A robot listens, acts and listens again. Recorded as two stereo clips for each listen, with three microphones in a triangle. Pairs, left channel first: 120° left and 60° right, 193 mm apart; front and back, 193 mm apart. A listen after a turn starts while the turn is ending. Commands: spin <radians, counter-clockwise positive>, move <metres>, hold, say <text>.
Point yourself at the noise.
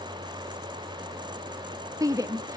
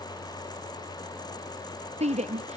spin -2.27
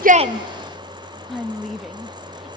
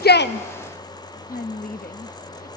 hold
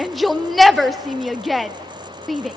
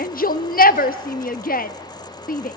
spin 0.52
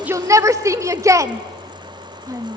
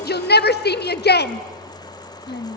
spin 0.26
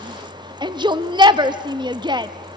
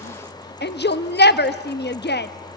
say Found it: a shout, straight ahead.